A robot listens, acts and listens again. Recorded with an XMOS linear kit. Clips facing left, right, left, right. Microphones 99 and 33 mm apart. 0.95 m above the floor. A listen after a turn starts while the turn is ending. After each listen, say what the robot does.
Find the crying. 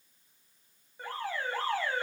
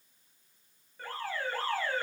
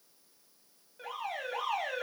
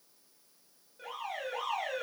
Keep listening.
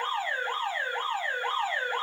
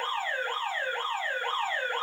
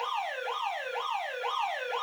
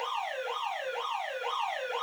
Keep listening.
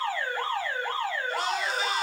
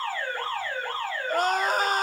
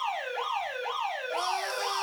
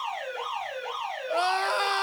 Turn 45° right.
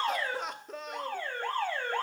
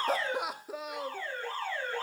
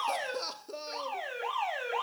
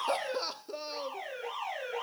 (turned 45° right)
Found it: crying, straight ahead, under 1 m away.